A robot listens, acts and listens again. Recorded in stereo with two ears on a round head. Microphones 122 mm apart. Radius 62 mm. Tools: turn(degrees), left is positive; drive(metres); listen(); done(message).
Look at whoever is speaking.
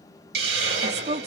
turn(degrees=-50)
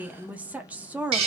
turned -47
turn(degrees=-10)
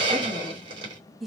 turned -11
done("Found it: a woman speaking, straight ahead.")